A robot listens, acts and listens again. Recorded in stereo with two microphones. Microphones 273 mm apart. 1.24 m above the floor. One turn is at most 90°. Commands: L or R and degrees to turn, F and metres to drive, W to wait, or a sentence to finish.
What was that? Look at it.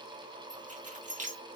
R30
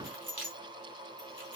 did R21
R90
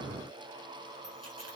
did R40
R90
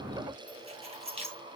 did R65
R25
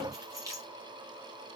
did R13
R15
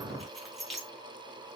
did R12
Facing the keys jangling.